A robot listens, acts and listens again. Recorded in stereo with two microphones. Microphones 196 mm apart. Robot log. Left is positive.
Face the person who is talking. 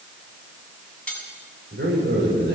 cmd yaw -90
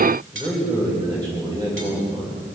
note: So it is at 20° right.
cmd yaw -20
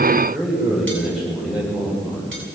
end: Found it: a man speaking, straight ahead.